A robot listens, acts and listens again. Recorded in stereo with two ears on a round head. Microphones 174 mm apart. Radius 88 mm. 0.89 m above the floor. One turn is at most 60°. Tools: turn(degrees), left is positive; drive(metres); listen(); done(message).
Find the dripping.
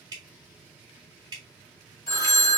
turn(degrees=-20)
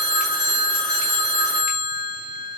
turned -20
listen()
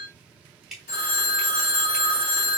done("Found it: dripping, straight ahead, 1 to 2 m away.")